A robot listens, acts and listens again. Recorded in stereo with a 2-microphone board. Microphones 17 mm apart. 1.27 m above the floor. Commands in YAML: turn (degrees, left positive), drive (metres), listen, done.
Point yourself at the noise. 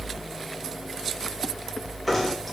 turn: -30
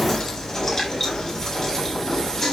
turn: 20
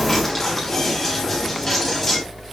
done: "Found it: knocking, straight ahead."